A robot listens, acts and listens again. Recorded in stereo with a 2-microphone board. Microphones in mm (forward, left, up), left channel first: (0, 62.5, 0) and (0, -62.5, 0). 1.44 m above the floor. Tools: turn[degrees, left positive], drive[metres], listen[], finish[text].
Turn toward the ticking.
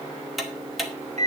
Action: turn[30]
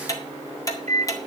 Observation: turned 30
Thought: So it is at 150° left.
Action: turn[150]
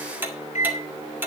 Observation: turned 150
Thought: The ticking is now 15° right.
Action: turn[-15]
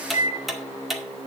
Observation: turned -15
Action: finish[Facing the ticking, 1 to 2 m away.]